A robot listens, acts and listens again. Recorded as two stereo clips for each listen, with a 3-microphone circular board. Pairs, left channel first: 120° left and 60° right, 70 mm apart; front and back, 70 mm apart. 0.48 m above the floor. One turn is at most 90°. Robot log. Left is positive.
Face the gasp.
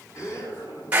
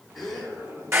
note: The gasp: 85° left.
cmd yaw +85
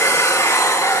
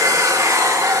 end: Facing where the gasp came from. I can't hear it now.